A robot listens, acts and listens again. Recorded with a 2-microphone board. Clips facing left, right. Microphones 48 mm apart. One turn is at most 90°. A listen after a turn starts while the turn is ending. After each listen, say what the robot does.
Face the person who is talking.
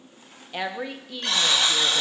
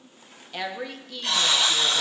Turn 30° left.
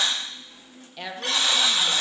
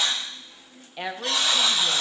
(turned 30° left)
Turn 20° right.
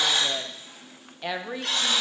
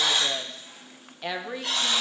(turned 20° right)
Facing the woman speaking, under 1 m away.